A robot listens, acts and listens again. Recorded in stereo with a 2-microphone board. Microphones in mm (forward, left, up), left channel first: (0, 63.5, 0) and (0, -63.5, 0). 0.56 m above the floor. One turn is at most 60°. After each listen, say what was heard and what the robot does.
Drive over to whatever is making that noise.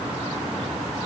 Keep listening.
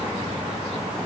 Keep listening.
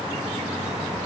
I can't make out anything to turn to.